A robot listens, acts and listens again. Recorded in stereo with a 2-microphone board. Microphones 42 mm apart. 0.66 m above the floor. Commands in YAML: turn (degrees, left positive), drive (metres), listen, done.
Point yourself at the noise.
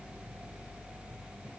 listen: true
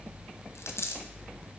turn: 90
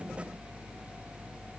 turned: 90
done: "Facing where the dropped coin came from. I can't hear it now."